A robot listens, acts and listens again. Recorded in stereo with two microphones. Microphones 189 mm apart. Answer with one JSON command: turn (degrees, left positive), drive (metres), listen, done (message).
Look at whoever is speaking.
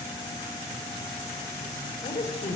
{"turn": 35}
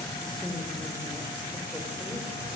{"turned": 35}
{"done": "Facing the woman speaking, over 4 m away."}